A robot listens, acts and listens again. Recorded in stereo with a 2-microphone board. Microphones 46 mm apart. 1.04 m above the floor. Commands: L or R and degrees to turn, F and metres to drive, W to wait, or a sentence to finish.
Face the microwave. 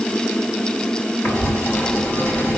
W
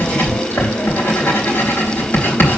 W
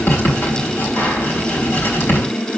I can't make out a microwave to turn to.